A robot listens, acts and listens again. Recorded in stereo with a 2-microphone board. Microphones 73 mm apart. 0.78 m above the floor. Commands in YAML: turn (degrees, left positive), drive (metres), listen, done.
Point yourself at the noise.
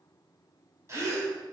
turn: -40
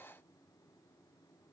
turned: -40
listen: true
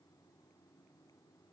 done: "I heard a gasp, but can't make it out now. It was about straight ahead or 100° right."